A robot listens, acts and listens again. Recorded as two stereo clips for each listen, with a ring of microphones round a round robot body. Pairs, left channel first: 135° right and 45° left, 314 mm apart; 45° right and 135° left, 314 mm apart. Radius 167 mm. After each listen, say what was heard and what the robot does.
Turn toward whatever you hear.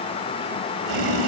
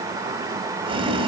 The boiling: 60° left. Turn 60° left.
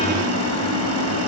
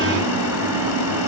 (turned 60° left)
Found it: boiling, straight ahead, 2 to 4 m away.